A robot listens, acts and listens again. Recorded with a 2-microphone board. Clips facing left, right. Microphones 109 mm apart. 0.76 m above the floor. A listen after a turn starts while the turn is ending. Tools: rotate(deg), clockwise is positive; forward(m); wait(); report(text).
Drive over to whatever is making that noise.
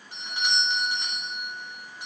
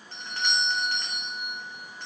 rotate(-30)
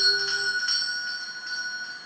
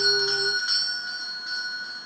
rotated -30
rotate(15)
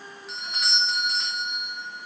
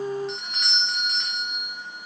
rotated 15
forward(1.0)
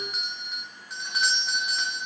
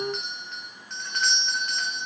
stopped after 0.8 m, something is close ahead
rotate(-10)
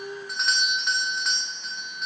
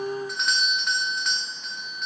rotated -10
report("I am next to the doorbell.")